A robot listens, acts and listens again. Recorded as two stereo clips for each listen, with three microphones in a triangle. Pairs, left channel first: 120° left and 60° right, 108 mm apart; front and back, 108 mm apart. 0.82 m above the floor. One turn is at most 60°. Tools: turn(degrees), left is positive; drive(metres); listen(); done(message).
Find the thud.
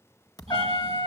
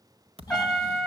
turn(degrees=60)
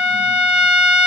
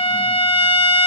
turn(degrees=60)
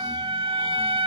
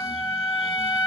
turn(degrees=50)
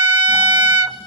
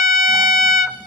done("I heard a thud from this way, but can't make it out now.")